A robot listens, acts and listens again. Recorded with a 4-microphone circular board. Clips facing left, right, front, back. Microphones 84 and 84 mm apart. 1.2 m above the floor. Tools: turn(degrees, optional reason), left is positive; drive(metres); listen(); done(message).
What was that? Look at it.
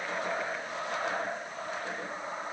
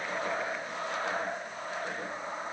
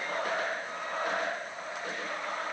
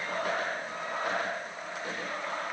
listen()
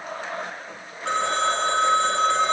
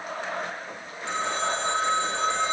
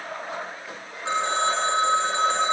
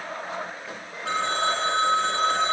turn(degrees=65, reason="The phone ringing: 65° left.")
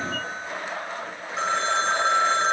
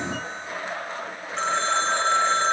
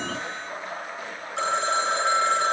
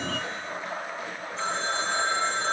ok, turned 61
done("Found it: a phone ringing, straight ahead, 2 to 4 m away.")